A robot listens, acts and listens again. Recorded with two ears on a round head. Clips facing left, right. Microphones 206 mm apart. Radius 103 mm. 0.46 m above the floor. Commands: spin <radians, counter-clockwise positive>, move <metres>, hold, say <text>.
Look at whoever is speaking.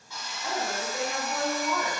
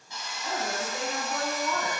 spin 0.52
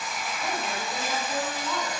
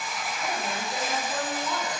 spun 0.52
spin -0.26
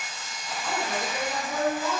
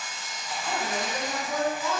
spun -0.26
say Found it: a woman speaking, straight ahead.